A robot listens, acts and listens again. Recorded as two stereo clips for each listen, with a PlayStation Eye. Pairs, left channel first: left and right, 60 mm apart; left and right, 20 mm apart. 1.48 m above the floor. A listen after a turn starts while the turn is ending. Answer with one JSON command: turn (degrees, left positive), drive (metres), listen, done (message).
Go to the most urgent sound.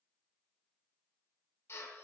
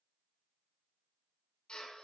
{"listen": true}
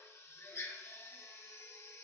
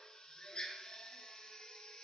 {"listen": true}
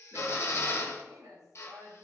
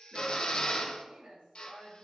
{"turn": -90}
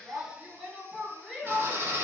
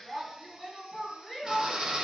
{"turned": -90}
{"drive": 1.0}
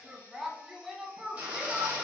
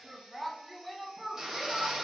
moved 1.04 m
{"drive": 1.0}
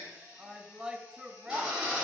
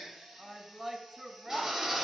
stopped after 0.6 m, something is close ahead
{"turn": -10}
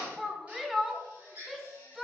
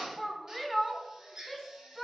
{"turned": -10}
{"done": "I am next to the shout."}